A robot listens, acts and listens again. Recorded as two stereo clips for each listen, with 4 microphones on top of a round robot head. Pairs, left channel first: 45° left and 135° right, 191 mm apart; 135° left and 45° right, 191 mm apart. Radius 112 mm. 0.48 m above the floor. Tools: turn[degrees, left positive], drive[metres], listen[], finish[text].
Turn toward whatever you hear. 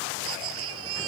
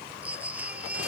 Thought: The baby crying: 125° right.
Action: turn[-125]
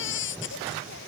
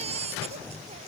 Thought: The baby crying is now 15° left.
Action: turn[15]
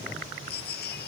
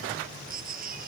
Action: finish[Facing the baby crying.]